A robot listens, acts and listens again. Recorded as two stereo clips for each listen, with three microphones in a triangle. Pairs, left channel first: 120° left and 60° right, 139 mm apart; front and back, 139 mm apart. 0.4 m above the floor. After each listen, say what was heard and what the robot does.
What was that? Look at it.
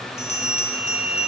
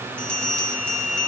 The bell: 80° left. Turn 80° left.
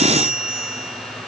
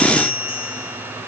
The bell is now 20° left. Turn 20° left.
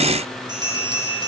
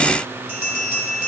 Facing the bell, 2 to 4 m away.